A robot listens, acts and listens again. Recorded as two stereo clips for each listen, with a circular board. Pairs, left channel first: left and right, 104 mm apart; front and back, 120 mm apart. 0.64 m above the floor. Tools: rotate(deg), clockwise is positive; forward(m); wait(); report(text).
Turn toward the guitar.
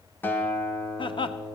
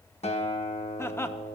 rotate(-20)
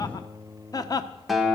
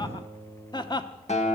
report("Found it: a guitar, straight ahead, 1 to 2 m away.")